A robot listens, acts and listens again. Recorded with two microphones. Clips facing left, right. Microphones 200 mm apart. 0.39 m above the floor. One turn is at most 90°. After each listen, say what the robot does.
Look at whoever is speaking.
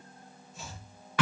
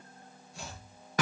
Keep listening.
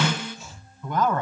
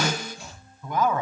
Turn 30° right.
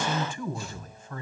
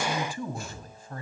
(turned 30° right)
Turn 90° right.
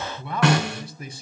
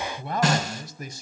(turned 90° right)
Turn 45° right.
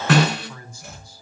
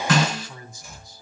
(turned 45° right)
Turn 20° right.
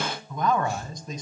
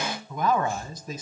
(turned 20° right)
Facing the man speaking, 2 to 4 m away.